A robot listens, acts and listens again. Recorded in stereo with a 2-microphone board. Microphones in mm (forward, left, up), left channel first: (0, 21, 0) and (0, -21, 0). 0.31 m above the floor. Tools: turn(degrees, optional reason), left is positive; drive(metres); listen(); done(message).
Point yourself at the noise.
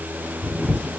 turn(degrees=25, reason="The camera shutter: about 25° left or 155° left.")
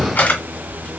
turn(degrees=125, reason="So it is at 125° left.")
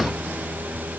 listen()
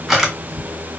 turn(degrees=-10, reason="The camera shutter is now 10° right.")
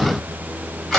done("Facing the camera shutter, 1 to 2 m away.")